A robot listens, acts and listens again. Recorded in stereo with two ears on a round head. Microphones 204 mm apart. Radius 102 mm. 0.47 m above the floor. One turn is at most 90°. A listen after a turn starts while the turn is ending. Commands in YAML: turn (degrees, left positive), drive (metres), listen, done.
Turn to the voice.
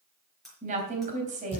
turn: -35
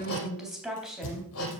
done: "Found it: a woman speaking, straight ahead."